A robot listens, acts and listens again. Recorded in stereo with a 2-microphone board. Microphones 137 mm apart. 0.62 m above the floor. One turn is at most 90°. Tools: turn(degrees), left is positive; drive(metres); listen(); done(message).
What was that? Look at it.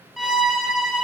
turn(degrees=30)
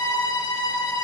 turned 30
turn(degrees=90)
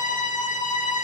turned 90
turn(degrees=70)
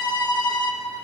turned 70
turn(degrees=30)
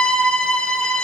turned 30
done("Facing the violin.")